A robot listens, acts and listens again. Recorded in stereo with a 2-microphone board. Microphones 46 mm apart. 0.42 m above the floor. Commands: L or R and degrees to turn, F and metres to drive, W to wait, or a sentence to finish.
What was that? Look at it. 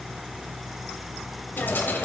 L45
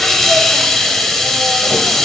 Found it: a hiss, straight ahead.